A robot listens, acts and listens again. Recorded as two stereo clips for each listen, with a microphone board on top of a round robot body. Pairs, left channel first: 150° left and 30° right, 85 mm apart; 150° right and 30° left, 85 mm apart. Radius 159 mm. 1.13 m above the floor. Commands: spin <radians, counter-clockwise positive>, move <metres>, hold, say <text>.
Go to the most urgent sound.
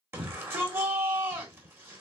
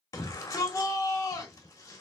spin -1.66
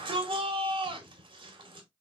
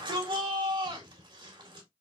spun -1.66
move 1.0
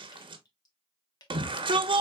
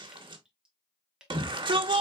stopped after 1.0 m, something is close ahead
say I am next to the shout.